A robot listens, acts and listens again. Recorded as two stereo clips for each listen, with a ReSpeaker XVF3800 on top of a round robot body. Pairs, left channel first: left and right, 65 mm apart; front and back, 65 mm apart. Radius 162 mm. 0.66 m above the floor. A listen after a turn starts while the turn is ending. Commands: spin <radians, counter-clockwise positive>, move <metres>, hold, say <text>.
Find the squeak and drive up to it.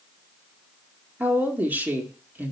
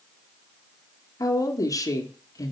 hold
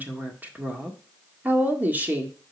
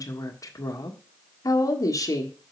hold
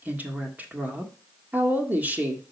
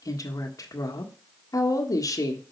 say I can't make out a squeak to turn to.